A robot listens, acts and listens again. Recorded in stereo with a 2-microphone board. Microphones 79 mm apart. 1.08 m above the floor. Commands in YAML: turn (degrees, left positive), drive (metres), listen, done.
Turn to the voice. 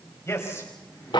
turn: 35
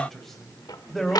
done: "Facing the man speaking."